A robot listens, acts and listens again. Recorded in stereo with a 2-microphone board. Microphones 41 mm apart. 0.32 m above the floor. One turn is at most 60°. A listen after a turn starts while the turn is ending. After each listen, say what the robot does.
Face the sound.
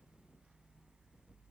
Keep listening.
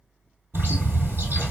Turn 60° right.
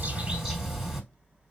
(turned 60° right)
Turn 10° right.
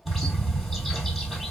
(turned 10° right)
Found it: a bird, straight ahead.